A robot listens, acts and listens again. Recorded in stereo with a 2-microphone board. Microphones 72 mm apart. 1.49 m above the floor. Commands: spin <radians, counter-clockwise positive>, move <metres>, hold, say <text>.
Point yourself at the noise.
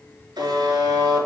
spin -1.57
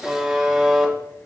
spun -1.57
say Facing the buzzer, 2 to 4 m away.